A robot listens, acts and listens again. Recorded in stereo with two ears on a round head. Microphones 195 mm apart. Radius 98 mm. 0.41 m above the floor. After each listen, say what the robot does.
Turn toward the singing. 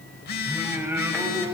Turn 20° right.
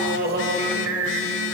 Turn 125° right.
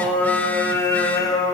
Turn 20° left.
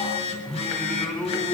Facing the singing.